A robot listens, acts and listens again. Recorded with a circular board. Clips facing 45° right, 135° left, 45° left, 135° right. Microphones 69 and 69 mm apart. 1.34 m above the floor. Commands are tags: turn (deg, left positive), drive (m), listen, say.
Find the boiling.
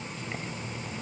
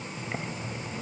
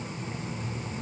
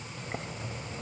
<turn deg="-160"/>
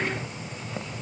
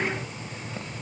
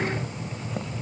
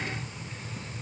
<turn deg="30"/>
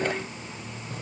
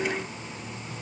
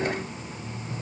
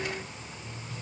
<listen/>
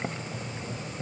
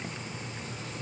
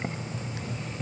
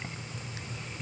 <turn deg="-10"/>
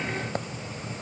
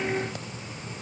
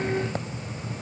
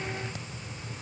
<say>Facing the boiling.</say>